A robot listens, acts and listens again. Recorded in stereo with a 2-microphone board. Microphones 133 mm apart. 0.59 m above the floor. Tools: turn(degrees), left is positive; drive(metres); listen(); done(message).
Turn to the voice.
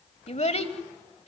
turn(degrees=55)
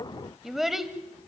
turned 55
done("Facing the child speaking.")